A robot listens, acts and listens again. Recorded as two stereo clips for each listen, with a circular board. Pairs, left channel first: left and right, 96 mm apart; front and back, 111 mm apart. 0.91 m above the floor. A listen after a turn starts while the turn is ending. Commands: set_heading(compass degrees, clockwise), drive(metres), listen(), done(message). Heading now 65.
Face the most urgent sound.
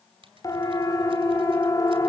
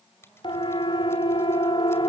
set_heading(25)
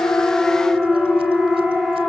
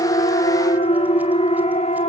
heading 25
done("Facing the siren.")